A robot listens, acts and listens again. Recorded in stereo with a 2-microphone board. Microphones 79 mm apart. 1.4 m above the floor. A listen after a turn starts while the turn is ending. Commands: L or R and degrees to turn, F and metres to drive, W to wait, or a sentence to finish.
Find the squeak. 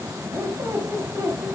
R25
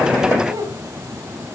R125
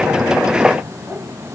Facing the squeak, over 4 m away.